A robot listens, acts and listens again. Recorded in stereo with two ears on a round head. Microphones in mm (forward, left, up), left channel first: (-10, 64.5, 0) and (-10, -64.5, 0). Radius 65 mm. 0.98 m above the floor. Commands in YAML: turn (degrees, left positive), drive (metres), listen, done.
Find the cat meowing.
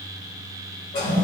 listen: true
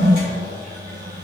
listen: true
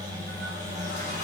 done: "I can't make out a cat meowing to turn to."